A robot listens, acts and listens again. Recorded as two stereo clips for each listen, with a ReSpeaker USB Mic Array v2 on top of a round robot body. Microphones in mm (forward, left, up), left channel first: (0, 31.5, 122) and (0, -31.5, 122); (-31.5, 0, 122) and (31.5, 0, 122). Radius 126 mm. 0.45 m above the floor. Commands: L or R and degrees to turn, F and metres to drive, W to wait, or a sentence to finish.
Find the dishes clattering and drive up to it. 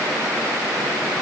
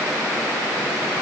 W
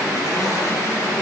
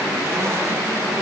W
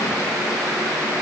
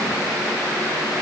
I can't make out dishes clattering to turn to.